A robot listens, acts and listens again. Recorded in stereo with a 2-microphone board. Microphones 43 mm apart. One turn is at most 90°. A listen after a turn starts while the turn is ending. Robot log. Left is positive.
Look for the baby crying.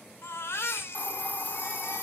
cmd yaw +90
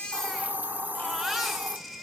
end: Found it: a baby crying, straight ahead, 2 to 4 m away.